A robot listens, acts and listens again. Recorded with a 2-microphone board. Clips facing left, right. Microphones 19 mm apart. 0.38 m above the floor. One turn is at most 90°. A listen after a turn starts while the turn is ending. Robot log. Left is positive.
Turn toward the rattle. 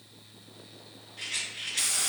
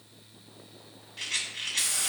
note: The rattle: about 40° right or 140° right.
cmd yaw -40
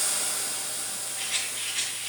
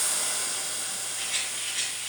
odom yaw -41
end: Found it: a rattle, straight ahead.